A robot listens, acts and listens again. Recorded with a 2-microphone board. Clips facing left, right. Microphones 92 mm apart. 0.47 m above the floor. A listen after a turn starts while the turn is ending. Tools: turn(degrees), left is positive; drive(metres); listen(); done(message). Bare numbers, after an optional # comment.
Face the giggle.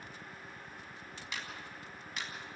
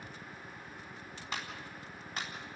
listen()
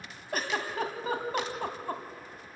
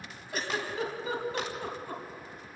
# The giggle: about 50° left or 130° left.
turn(50)
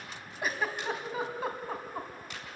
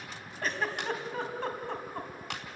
done("Found it: a giggle, straight ahead.")